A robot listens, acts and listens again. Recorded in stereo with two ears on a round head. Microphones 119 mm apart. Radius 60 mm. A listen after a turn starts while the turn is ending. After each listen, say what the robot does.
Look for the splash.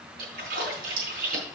Turn 90° right.
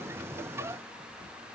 Facing where the splash came from. I can't hear it now.